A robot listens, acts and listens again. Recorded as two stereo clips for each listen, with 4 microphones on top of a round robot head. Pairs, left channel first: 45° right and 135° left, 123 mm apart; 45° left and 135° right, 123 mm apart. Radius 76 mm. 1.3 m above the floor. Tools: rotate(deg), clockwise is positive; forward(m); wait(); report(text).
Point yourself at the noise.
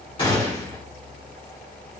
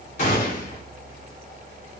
rotate(-10)
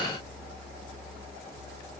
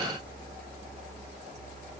report("Facing where the gunshot came from. I can't hear it now.")